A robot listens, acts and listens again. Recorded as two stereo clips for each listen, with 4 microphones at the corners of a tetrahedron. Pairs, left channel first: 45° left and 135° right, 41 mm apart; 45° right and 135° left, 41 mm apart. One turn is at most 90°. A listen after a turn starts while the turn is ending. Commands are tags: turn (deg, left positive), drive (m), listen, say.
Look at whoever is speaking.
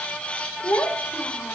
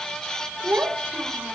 <turn deg="75"/>
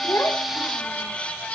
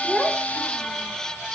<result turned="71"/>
<listen/>
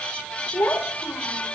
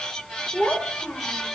<say>Found it: a child speaking, straight ahead.</say>